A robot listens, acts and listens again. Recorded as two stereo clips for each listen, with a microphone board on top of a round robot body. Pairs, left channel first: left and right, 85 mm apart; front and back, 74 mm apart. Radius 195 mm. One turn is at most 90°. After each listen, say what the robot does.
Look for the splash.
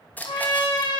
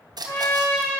Turn 90° left.
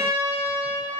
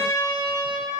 Turn 70° left.
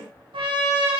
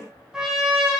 Facing where the splash came from. I can't hear it now.